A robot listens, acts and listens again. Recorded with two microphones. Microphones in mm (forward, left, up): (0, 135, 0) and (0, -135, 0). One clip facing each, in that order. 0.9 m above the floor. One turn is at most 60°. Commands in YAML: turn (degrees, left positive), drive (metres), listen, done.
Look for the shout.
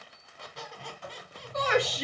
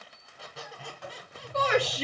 turn: -35
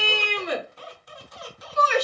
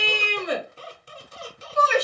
turn: -60
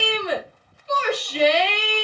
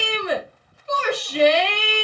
turn: -60
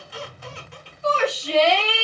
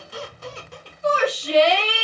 turn: -20
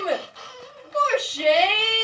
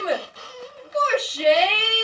done: "Facing the shout."